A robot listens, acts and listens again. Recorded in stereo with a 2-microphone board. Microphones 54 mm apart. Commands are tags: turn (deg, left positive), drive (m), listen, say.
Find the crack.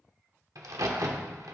<turn deg="-90"/>
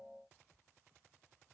<say>Facing where the crack came from. I can't hear it now.</say>